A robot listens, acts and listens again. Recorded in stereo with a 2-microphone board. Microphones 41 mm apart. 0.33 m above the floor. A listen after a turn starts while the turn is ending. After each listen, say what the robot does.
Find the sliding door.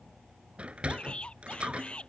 Turn 30° right.
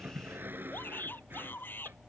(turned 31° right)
Turn 120° right.
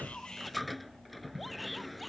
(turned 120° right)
Facing the sliding door.